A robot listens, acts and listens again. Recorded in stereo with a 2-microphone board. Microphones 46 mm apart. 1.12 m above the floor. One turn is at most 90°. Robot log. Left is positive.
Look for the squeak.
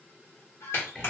note: The squeak: about 75° left or 105° left.
cmd yaw +75
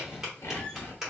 cmd idle
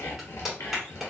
cmd idle
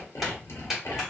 end: I heard a squeak, but can't make it out now. It was about straight ahead or 30° left.